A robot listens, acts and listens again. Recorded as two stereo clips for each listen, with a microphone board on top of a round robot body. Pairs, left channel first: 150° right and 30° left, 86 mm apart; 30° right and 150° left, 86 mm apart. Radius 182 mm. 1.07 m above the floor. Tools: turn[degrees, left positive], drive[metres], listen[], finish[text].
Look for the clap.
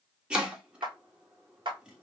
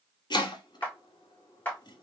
Thought: The clap: 40° left.
Action: turn[40]
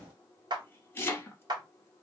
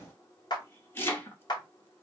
Action: finish[Facing the clap.]